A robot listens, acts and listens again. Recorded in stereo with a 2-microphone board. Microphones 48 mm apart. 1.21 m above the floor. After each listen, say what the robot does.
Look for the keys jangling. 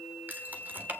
Turn 40° right.
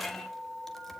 Found it: keys jangling, straight ahead, 2 to 4 m away.